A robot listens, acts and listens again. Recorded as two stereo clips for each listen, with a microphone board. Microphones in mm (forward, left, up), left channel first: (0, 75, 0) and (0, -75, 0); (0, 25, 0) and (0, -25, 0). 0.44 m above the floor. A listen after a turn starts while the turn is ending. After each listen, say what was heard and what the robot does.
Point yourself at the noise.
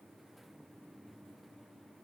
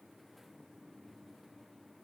Keep listening.
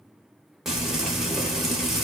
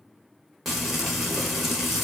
Turn 30° right.
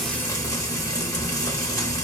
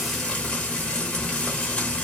So it is at 25° left. Turn 25° left.
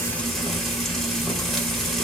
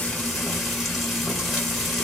Found it: frying, straight ahead, 1 to 2 m away.